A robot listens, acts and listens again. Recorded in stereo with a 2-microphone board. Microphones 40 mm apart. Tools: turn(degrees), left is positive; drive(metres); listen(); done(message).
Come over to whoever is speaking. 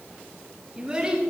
turn(degrees=-20)
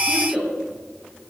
drive(metres=1.0)
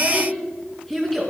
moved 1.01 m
drive(metres=1.0)
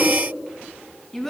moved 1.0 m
turn(degrees=10)
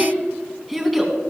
drive(metres=1.0)
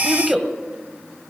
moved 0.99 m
drive(metres=1.0)
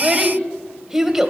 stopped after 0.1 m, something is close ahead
turn(degrees=-15)
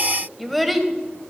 done("Arrived at the child speaking, straight ahead.")